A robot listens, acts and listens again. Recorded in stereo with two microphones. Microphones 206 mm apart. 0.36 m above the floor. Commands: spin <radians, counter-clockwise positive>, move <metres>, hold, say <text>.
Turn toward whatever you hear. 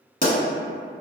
spin 0.79
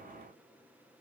hold
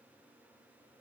say I heard a pop, but can't make it out now. It was about straight ahead or 90° left.